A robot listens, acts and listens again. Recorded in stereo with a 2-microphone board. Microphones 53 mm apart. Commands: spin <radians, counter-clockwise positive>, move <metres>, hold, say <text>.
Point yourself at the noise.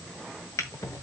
spin 1.22
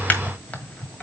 spin 0.52
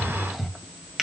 say Found it: a drawer, straight ahead.